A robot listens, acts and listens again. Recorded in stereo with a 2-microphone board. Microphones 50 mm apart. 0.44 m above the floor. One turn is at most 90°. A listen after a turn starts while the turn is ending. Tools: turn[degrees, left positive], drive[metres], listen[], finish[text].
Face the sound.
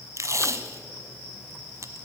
Thought: The tape being pulled: about 70° right or 110° right.
Action: turn[-70]
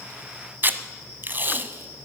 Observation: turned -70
Thought: So it is at 40° right.
Action: turn[-40]
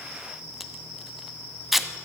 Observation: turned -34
Action: finish[Found it: tape being pulled, straight ahead, under 1 m away.]